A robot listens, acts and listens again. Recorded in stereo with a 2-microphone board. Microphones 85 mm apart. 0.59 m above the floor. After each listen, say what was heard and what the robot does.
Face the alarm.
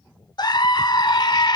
Keep listening.
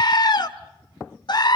Keep listening.
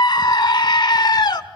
I can't make out an alarm to turn to.